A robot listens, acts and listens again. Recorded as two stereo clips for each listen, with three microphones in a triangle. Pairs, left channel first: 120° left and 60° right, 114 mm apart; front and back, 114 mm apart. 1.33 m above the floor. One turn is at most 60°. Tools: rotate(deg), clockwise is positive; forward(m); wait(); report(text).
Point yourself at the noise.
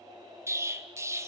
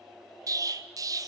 rotate(60)
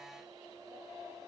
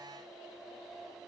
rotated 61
rotate(60)
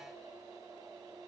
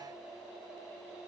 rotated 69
rotate(-10)
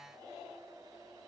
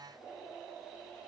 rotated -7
report("Facing where the explosion came from. I can't hear it now.")